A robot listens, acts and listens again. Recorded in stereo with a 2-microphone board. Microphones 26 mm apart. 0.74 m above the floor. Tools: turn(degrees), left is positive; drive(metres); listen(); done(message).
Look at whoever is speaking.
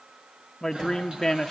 turn(degrees=20)
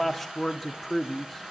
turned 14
turn(degrees=10)
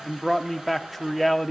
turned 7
done("Facing the man speaking.")